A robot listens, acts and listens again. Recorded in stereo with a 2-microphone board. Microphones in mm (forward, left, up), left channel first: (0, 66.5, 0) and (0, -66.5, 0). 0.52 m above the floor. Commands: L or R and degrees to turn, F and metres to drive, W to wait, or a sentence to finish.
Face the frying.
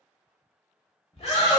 W
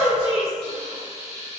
L45
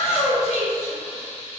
L10
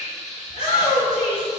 Found it: frying, straight ahead, under 1 m away.